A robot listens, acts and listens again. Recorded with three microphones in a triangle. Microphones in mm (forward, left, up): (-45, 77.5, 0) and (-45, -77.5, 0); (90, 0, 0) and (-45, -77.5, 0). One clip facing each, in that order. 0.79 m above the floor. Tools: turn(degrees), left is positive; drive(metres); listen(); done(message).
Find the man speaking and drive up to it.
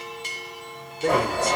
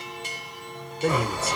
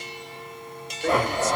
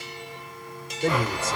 turn(degrees=-175)
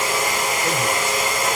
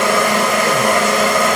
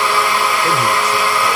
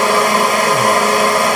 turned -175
listen()
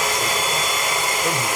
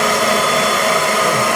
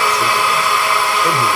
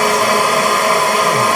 listen()
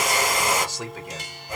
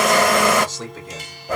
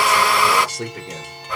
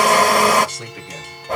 turn(degrees=10)
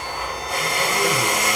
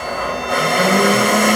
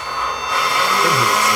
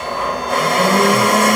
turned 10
listen()
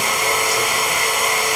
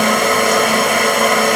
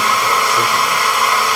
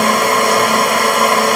listen()
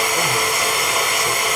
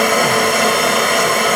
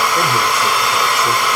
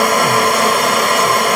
done("I heard a man speaking from this way, but can't make it out now. I did not reach it.")